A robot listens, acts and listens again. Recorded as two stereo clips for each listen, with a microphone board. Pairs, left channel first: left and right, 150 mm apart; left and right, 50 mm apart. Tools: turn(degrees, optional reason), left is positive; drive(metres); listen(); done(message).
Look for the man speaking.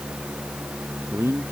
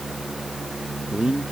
turn(degrees=-20, reason="The man speaking: about 20° right or 160° right.")
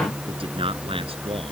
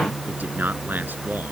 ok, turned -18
turn(degrees=-40, reason="The man speaking: about 40° right or 140° right.")
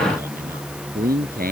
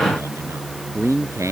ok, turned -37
turn(degrees=-100, reason="So it is at 100° right.")
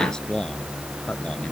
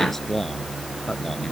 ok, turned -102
done("Facing the man speaking.")